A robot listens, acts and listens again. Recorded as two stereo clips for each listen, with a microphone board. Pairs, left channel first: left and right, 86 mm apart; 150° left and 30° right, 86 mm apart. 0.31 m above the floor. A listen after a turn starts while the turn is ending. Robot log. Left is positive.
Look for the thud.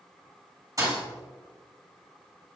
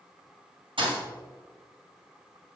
note: The thud: 40° right.
cmd yaw -40
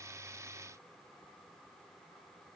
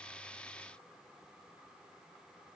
end: I heard a thud from this way, but can't make it out now.